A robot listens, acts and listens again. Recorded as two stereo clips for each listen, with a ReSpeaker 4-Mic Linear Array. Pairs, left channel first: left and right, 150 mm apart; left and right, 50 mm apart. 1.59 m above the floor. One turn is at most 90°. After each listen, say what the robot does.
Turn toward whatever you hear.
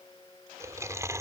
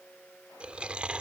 Turn 20° right.
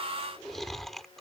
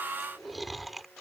Facing the chewing.